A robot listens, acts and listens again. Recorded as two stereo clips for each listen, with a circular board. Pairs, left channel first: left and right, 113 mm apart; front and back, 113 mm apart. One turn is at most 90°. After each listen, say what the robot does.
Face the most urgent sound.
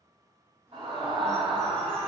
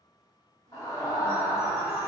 Turn 55° right.
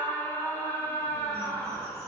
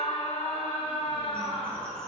Turn 20° left.
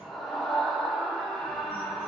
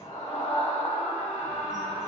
Found it: a scream, straight ahead.